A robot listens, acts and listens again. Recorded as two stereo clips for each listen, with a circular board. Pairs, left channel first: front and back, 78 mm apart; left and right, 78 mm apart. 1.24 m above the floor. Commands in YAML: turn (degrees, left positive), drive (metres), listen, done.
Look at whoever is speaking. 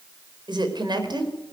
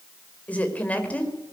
turn: 160
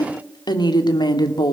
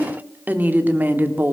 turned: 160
turn: -25
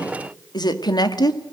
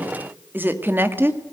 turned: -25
turn: -30
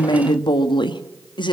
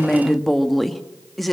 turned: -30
done: "Found it: a woman speaking, straight ahead, 1 to 2 m away."